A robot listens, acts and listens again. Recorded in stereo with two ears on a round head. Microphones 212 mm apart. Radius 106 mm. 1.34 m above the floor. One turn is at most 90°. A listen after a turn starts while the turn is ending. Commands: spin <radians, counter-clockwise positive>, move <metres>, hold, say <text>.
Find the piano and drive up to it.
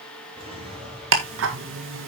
hold
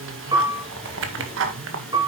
spin -0.35
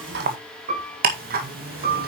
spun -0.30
spin -1.57
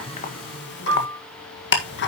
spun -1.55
spin -0.96
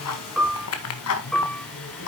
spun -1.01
move 1.0
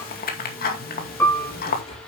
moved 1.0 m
spin 0.17
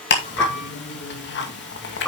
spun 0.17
move 1.0
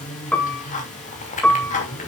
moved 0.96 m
move 1.0
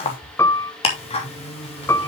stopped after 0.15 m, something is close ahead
spin 0.17
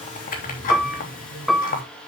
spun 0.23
say I am next to the piano.